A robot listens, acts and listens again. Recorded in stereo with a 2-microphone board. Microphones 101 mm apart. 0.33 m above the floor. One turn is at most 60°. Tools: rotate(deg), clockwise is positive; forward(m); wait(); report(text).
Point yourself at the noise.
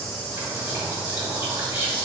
rotate(20)
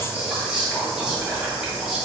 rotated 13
rotate(10)
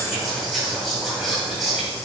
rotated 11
report("Found it: whispering, straight ahead.")